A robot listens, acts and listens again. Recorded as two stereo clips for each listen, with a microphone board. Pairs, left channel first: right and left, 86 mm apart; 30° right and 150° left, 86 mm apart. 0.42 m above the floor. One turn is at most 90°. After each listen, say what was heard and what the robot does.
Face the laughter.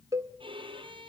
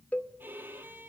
Keep listening.
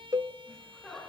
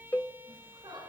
The laughter: 175° right. Turn 90° right.
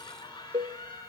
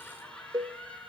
The laughter is now 105° right. Turn 90° right.
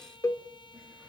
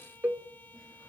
Nothing new. It was at 15° right. Turn 15° right.
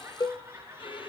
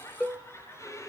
The laughter is now 30° left. Turn 30° left.
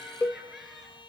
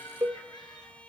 Keep listening.
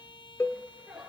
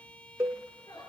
Found it: laughter, straight ahead, over 4 m away.